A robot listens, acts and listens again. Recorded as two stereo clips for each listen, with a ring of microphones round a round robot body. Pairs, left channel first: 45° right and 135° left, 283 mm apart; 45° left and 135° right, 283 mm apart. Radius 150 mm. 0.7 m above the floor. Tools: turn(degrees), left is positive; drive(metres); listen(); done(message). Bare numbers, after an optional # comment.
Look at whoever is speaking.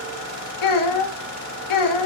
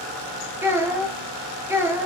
# The child speaking: 55° right.
turn(-55)
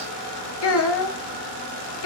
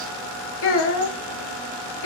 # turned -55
done("Found it: a child speaking, straight ahead, under 1 m away.")